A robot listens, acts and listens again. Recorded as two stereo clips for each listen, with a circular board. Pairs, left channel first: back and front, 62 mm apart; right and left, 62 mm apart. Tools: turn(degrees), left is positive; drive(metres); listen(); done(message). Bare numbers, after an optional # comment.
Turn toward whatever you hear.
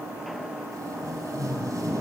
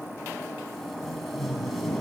done("Found it: tape being pulled, straight ahead.")